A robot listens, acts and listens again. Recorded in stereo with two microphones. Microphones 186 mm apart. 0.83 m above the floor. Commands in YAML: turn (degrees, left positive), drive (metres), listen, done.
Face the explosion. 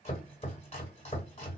listen: true
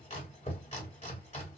listen: true
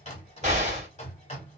turn: -40
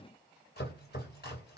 listen: true
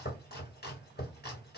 done: "I heard an explosion, but can't make it out now. It was about straight ahead or 100° right."